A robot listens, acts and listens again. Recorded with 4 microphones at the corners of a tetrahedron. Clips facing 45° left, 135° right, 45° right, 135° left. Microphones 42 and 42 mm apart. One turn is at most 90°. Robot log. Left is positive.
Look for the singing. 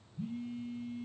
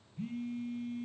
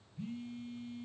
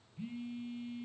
cmd idle
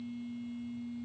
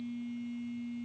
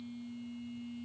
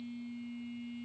cmd idle
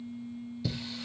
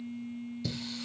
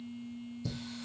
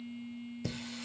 note: The singing: 125° left.
cmd yaw +90
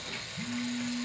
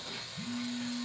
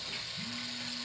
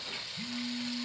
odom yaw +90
note: The singing is now 50° left.
cmd yaw +50
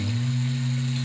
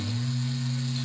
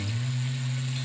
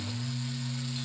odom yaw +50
end: Found it: singing, straight ahead.